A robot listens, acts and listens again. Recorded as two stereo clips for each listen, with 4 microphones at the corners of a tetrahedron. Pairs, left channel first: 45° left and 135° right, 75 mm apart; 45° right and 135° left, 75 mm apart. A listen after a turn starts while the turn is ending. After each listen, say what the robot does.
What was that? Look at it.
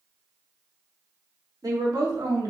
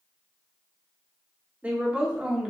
Turn 145° right.
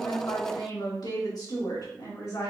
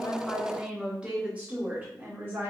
Turn 80° left.
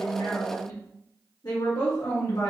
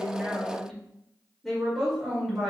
Turn 45° left.
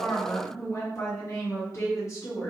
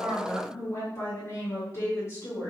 Found it: a woman speaking, straight ahead.